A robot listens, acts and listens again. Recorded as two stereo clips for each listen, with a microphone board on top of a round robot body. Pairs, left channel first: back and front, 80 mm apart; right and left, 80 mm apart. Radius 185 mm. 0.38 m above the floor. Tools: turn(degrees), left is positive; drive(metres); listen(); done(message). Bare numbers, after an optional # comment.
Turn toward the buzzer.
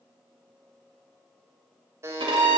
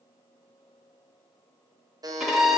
# The buzzer: 55° left.
turn(55)
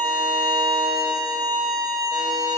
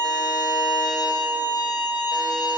listen()
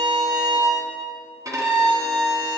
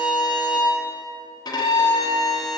listen()
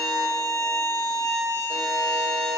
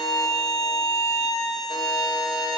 done("Facing where the buzzer came from. I can't hear it now.")